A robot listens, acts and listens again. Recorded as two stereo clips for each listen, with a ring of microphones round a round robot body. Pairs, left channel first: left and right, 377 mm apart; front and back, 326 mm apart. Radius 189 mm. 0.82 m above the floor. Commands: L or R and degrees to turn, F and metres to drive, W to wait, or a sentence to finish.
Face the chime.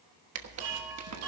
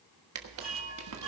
R100
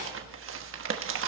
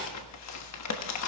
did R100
W
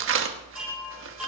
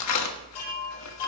Facing the chime.